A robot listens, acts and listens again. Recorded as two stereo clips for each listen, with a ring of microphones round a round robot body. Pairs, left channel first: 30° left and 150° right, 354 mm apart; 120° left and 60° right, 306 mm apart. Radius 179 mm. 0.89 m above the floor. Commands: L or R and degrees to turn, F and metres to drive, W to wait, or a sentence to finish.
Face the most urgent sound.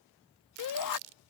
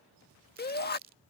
L60
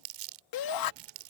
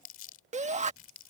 Found it: a shout, straight ahead.